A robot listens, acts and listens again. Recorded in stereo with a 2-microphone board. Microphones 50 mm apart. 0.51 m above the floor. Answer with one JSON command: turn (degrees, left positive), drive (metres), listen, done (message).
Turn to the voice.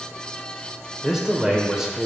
{"turn": -30}
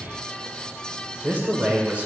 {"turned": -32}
{"turn": -140}
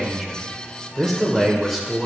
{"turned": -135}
{"done": "Found it: a man speaking, straight ahead."}